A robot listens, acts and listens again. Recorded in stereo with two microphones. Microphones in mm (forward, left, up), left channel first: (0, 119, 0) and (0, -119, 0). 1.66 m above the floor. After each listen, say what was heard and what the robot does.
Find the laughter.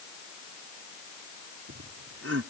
Turn 90° right.
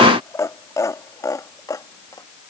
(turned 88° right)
So it is at 15° left. Turn 15° left.
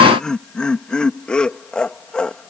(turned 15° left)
Found it: laughter, straight ahead.